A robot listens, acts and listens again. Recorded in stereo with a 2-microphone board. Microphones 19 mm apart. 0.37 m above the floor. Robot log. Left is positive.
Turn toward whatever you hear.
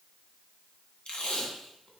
note: The tape being pulled: about 65° left or 115° left.
cmd yaw +65
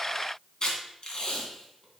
note: So it is at 45° left.
cmd yaw +45
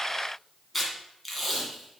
end: Facing the tape being pulled, 2 to 4 m away.